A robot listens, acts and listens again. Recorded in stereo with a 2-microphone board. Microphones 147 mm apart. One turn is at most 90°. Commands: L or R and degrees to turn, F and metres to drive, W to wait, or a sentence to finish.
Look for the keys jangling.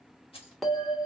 L40
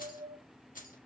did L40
L90
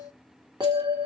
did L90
L25
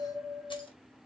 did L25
W
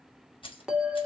L35
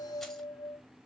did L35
W
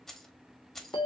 Found it: keys jangling, straight ahead.